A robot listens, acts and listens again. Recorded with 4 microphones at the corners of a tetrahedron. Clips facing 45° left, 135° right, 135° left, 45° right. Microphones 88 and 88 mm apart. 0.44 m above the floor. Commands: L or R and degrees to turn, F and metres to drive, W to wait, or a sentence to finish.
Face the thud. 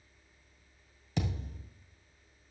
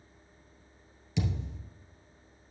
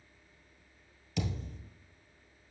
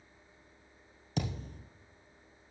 Found it: a thud, straight ahead.